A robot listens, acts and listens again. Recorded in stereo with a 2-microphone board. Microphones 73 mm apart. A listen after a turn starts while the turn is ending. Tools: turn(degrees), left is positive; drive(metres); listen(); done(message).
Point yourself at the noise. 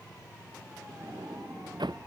turn(degrees=-90)
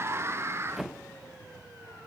done("Found it: a sliding door, straight ahead.")